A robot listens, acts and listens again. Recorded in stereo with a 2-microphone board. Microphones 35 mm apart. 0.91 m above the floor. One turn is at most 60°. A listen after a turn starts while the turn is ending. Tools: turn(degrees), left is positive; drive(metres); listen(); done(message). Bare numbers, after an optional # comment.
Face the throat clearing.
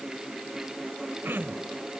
turn(-60)
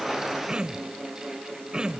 # So it is at 25° right.
turn(-25)
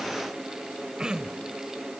# The throat clearing is now 25° right.
turn(-25)
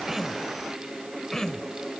# The throat clearing is now 15° left.
turn(15)
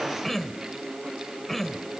done("Found it: throat clearing, straight ahead.")